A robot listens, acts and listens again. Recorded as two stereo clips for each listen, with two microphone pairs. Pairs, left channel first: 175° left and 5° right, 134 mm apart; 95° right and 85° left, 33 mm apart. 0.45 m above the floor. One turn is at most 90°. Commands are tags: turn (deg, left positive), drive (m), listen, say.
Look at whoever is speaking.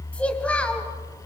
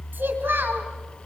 <turn deg="90"/>
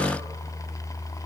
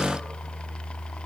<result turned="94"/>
<listen/>
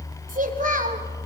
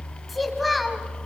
<say>Facing the child speaking, 2 to 4 m away.</say>